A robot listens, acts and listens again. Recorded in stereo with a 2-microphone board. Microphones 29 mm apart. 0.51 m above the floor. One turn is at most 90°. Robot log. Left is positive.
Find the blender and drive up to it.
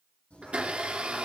note: The blender: about 45° right or 135° right.
cmd yaw -45
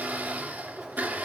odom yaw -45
note: So it is at 90° right.
cmd yaw -90
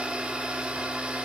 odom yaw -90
note: The blender is now 45° right.
cmd yaw -45
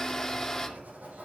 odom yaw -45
note: The blender is now 15° left.
cmd yaw +15
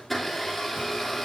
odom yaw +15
cmd fwd 1.0
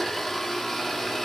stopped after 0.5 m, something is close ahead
end: Blocked. The blender is further on, straight ahead.